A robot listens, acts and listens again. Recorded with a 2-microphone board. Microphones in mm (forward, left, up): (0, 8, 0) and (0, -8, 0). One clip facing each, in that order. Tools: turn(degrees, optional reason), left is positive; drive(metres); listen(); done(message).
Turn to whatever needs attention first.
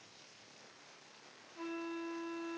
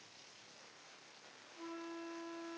listen()
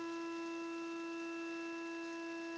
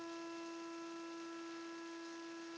listen()
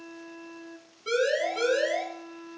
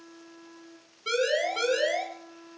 turn(degrees=-25, reason="The siren: about 25° right or 155° right.")
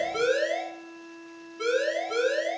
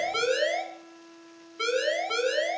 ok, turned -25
turn(degrees=-130, reason="So it is at 130° right.")
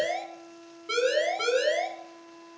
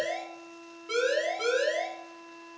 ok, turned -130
turn(degrees=25, reason="The siren is now 25° left.")
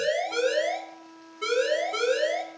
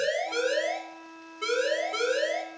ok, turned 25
done("Found it: a siren, straight ahead, 2 to 4 m away.")